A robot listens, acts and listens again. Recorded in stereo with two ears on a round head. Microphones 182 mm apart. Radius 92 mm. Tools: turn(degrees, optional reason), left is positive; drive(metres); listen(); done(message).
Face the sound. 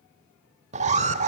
turn(degrees=-35, reason="The alarm: about 35° right or 145° right.")
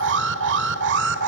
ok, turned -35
turn(degrees=-105, reason="So it is at 105° right.")
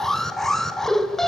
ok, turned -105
done("Facing the alarm.")